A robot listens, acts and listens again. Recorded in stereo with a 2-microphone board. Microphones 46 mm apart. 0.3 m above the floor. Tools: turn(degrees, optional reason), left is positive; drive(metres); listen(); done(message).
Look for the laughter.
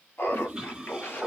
turn(degrees=55, reason="The laughter: about 55° left or 125° left.")
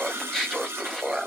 turn(degrees=-10, reason="So it is at 10° right.")
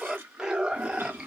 turn(degrees=-20, reason="The laughter is now 20° right.")
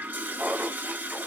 turn(degrees=-25, reason="The laughter is now 25° right.")
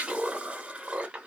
turn(degrees=-20, reason="The laughter is now 20° right.")
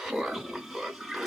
done("Found it: laughter, straight ahead.")